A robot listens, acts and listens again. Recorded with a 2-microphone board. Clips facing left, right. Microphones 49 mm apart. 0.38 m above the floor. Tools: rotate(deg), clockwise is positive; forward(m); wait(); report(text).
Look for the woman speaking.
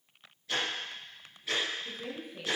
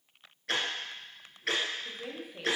rotate(20)
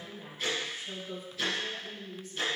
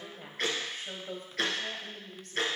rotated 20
rotate(120)
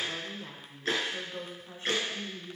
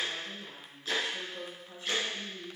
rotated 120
rotate(-45)
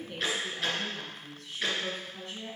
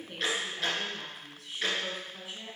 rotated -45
rotate(10)
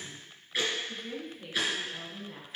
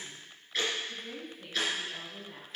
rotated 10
report("Found it: a woman speaking, straight ahead.")